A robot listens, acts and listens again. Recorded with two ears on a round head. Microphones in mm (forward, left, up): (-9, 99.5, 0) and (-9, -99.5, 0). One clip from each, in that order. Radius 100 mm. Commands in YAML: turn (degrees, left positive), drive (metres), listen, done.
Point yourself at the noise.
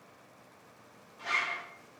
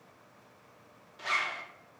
turn: -35
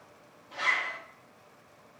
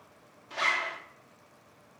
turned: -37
turn: -105
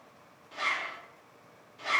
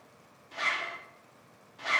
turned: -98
turn: -10
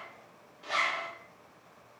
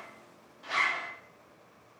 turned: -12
done: "Found it: a zipper, straight ahead, under 1 m away."